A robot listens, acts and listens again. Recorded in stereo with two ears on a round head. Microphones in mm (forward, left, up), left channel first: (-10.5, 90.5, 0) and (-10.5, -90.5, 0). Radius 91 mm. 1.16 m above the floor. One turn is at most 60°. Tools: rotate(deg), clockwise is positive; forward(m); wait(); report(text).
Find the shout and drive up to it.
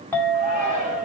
rotate(45)
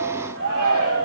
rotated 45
rotate(60)
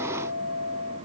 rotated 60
rotate(30)
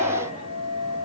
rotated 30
wait()
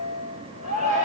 rotate(35)
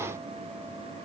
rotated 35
wait()
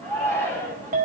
rotate(-10)
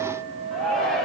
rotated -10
forward(1.0)
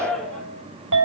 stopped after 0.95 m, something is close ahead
report("Blocked. The shout is further on, straight ahead.")